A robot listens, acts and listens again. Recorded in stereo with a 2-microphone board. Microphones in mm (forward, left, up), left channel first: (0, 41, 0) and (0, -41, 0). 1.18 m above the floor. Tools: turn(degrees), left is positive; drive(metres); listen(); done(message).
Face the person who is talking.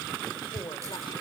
turn(degrees=65)
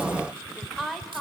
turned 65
done("Found it: a woman speaking, straight ahead, over 4 m away.")